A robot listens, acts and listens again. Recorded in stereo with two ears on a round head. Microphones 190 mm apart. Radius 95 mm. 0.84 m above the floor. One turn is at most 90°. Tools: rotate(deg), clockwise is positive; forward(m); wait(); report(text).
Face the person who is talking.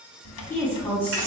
rotate(-30)
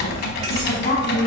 rotate(-90)
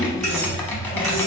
rotate(-50)
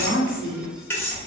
rotate(-50)
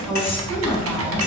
rotate(-10)
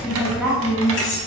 report("Facing the woman speaking.")